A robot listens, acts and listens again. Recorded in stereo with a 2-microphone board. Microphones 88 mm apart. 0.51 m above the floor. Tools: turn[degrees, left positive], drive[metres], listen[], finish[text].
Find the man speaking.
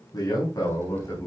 Thought: The man speaking: about 40° left or 140° left.
Action: turn[40]
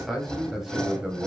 Thought: So it is at 10° right.
Action: turn[-10]
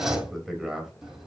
Action: finish[Facing the man speaking.]